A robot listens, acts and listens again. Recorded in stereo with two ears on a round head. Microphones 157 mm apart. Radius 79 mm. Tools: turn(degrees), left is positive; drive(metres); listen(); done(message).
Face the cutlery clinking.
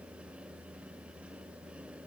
listen()
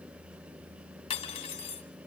turn(degrees=35)
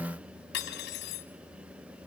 turn(degrees=115)
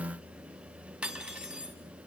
done("Facing the cutlery clinking.")